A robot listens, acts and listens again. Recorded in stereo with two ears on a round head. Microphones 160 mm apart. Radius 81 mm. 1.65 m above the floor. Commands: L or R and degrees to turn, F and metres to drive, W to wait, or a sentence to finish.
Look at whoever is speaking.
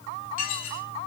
W
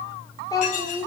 L25
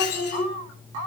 L125
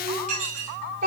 R50
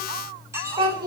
R25
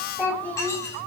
L10
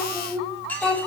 Facing the child speaking, over 4 m away.